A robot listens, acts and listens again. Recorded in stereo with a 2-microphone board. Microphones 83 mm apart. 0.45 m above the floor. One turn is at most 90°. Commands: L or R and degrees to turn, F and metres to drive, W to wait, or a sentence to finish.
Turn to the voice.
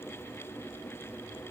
W
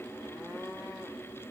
W
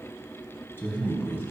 L25
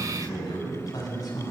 L90
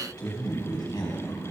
L60
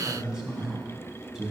Found it: a man speaking, straight ahead, over 4 m away.